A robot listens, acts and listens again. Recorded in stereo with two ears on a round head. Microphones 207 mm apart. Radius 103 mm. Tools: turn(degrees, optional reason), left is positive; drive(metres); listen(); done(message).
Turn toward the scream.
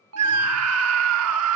turn(degrees=-70, reason="The scream: about 70° right or 110° right.")
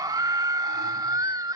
turn(degrees=-20, reason="So it is at 20° right.")
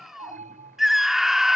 done("Facing the scream.")